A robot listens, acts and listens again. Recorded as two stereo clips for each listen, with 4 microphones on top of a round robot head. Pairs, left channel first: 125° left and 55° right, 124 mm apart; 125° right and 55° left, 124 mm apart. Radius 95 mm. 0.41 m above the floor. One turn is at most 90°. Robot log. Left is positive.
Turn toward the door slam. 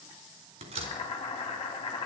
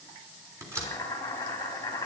note: The door slam: 15° right.
cmd yaw -15
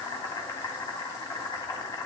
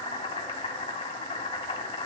end: I heard a door slam from this way, but can't make it out now.